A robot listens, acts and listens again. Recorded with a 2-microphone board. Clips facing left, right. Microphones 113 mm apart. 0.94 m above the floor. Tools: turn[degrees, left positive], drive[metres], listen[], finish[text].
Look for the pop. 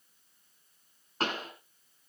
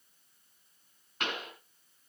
Thought: The pop: about 35° left or 145° left.
Action: turn[35]
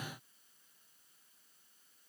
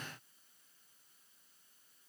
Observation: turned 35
Action: listen[]
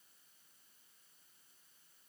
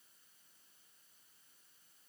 Action: finish[I heard a pop, but can't make it out now. It was about straight ahead or 110° left.]